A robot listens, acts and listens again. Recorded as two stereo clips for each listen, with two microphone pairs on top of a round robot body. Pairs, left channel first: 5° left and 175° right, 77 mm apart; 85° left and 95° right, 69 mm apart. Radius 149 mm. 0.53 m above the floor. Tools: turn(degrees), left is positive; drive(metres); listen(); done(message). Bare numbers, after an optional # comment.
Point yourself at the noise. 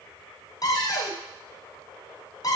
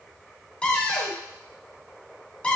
# The cupboard door: 20° left.
turn(20)
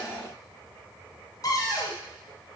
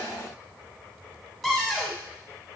# The cupboard door is now 10° left.
turn(10)
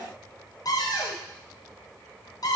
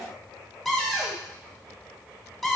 done("Facing the cupboard door, 1 to 2 m away.")